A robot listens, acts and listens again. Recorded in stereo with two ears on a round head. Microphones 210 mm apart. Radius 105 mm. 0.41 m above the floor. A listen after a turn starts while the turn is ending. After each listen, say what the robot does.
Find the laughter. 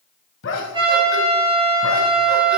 Turn 60° left.
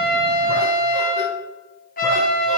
Keep listening.
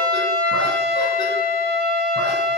Keep listening.
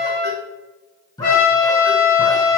Turn 20° left.
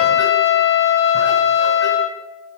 Keep listening.
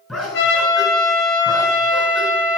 Facing the laughter.